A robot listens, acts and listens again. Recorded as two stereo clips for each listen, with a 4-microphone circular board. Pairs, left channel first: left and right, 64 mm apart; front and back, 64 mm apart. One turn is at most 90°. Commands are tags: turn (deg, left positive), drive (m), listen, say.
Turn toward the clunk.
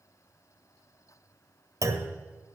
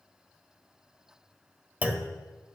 <turn deg="-90"/>
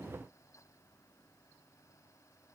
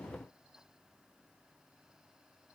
<turn deg="-20"/>
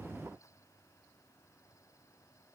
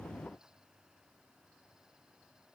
<say>Facing where the clunk came from. I can't hear it now.</say>